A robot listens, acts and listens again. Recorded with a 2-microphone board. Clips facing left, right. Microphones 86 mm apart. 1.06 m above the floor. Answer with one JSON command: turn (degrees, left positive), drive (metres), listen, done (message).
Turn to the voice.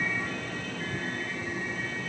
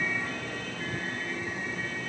{"listen": true}
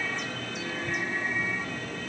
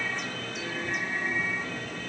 {"listen": true}
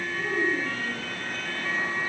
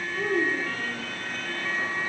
{"turn": -75}
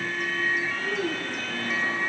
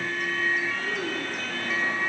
{"done": "Found it: a child speaking, straight ahead, over 4 m away."}